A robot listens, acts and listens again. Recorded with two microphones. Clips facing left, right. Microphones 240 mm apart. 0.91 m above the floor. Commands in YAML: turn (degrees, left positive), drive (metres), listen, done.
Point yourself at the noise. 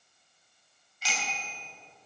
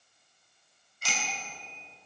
turn: -55
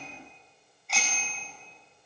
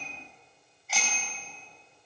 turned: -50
done: "Facing the bicycle bell, 2 to 4 m away."